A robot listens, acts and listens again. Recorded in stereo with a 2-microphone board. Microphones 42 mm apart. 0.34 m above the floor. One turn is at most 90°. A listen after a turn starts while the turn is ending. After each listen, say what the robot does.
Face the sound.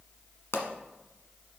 Turn 90° left.
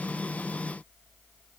Facing where the pop came from. I can't hear it now.